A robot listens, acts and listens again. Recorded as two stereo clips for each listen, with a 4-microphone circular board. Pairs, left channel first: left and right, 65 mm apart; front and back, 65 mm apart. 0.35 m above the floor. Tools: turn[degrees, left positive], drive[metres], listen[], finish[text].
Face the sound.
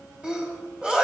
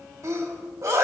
Thought: The sneeze: 160° right.
Action: turn[-160]
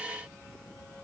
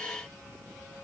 Action: finish[Facing where the sneeze came from. I can't hear it now.]